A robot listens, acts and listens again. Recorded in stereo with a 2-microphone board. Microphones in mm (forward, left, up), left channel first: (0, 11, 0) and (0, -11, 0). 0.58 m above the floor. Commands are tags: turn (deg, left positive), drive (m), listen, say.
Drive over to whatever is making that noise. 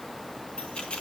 <turn deg="60"/>
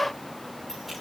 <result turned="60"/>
<listen/>
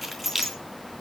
<drive m="1.0"/>
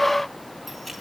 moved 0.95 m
<listen/>
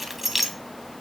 <drive m="1.0"/>
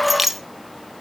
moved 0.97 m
<turn deg="-10"/>
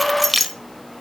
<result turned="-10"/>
<drive m="1.0"/>
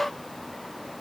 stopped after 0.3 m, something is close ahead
<listen/>
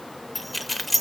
<say>Arrived at the keys jangling, straight ahead.</say>